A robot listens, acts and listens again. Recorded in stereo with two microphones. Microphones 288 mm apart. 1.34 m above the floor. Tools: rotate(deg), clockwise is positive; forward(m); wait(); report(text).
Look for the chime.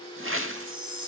rotate(-70)
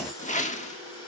wait()
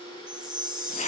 report("Facing the chime.")